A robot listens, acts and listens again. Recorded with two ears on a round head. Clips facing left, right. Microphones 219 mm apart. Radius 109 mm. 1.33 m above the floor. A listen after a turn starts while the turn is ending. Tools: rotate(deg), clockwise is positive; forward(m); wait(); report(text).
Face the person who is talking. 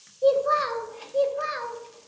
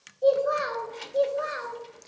rotate(-40)
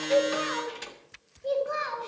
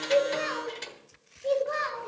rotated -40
rotate(-10)
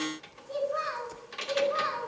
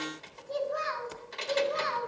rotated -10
report("Found it: a child speaking, straight ahead, over 4 m away.")